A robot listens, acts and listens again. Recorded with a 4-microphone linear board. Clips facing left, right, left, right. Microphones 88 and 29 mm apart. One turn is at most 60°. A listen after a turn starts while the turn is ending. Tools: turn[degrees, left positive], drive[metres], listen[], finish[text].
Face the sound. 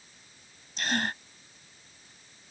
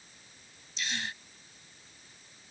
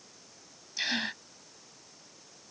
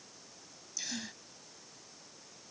Thought: The gasp: about 50° left or 130° left.
Action: turn[50]
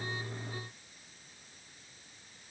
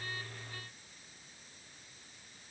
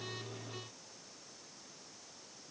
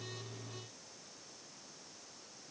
Action: listen[]
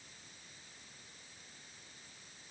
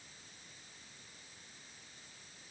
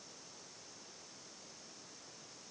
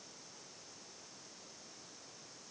Action: finish[I heard a gasp, but can't make it out now. It was about straight ahead or 80° left.]